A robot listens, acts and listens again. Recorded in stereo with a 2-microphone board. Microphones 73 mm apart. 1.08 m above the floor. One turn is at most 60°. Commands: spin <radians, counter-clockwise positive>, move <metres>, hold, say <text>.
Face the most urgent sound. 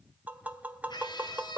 spin 1.05
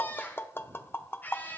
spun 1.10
spin 0.44
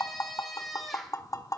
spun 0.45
say Found it: a scream, straight ahead.